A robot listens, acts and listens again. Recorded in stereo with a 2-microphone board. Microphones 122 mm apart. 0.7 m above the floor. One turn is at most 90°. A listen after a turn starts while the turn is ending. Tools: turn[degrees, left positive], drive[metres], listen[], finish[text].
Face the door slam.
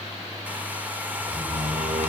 Thought: The door slam: about 70° right or 110° right.
Action: turn[-70]
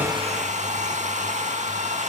Action: listen[]
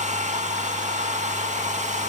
Action: finish[I heard a door slam, but can't make it out now. It was about straight ahead or 40° right.]